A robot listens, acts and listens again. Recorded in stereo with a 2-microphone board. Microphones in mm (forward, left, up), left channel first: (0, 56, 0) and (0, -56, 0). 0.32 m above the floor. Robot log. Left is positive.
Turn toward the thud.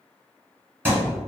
note: The thud: about 20° right or 160° right.
cmd yaw -20
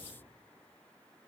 cmd idle
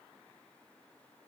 end: I heard a thud, but can't make it out now. It was about straight ahead or 140° right.